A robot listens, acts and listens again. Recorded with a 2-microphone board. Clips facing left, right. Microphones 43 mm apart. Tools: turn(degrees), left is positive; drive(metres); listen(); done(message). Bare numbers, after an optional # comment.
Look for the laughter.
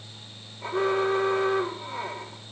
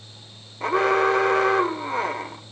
listen()
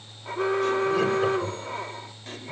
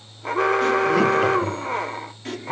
# The laughter: about 75° right or 105° right.
turn(-75)
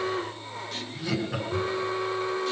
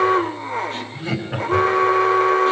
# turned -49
# So it is at 30° right.
turn(-30)
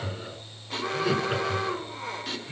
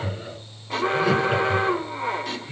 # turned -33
done("Found it: laughter, straight ahead, over 4 m away.")